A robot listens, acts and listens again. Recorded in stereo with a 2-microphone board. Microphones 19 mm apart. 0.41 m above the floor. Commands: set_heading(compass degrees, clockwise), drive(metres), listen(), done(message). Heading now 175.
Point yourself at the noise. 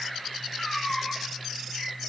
set_heading(130)
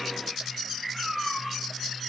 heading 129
done("Found it: a cat meowing, straight ahead, 2 to 4 m away.")